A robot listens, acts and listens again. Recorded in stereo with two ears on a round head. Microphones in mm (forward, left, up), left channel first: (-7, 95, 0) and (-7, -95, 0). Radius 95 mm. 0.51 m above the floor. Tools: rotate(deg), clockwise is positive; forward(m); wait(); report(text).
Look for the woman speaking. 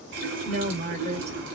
rotate(30)
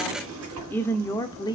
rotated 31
rotate(-20)
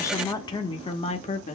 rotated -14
rotate(-35)
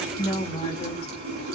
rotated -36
rotate(-25)
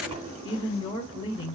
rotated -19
rotate(-20)
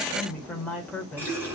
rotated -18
report("Found it: a woman speaking, straight ahead, 1 to 2 m away.")